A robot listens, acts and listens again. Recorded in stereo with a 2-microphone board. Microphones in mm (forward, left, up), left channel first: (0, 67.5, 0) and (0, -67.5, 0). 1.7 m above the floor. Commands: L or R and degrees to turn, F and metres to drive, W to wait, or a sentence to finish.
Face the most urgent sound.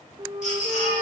L65
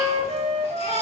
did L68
L45
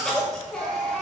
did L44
Facing the baby crying, over 4 m away.